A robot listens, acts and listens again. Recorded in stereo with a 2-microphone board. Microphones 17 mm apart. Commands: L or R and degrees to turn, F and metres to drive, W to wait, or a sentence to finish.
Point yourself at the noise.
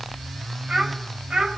R90
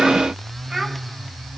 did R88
W
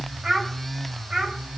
R35
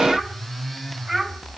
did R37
R15
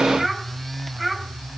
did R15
Found it: a child speaking, straight ahead.